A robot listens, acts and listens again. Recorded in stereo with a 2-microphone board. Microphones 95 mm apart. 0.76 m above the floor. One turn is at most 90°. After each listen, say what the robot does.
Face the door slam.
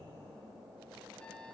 Keep listening.
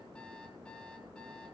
Keep listening.
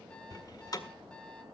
Turn 40° left.
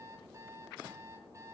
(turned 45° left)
Keep listening.
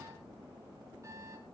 I heard a door slam, but can't make it out now. It was about 5° right or 95° left.